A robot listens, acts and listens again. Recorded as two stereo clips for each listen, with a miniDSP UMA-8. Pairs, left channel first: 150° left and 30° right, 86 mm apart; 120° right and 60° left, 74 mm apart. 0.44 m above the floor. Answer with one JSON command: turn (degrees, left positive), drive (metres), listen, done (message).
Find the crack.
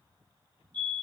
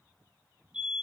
{"listen": true}
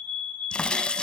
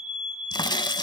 {"turn": -130}
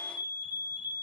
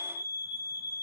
{"done": "I heard a crack from this way, but can't make it out now."}